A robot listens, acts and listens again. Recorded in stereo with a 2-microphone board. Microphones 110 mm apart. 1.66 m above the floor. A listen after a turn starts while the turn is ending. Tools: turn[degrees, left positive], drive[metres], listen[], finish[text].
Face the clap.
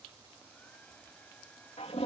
Action: listen[]
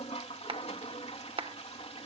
Thought: The clap: about 60° right or 120° right.
Action: turn[-60]
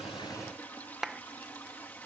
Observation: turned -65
Action: finish[Found it: a clap, straight ahead.]